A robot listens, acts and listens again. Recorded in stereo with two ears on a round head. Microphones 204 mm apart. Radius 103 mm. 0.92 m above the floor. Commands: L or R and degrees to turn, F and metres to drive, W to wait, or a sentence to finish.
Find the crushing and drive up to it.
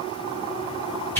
W
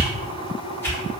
W
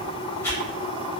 I can't make out crushing, only a whoosh.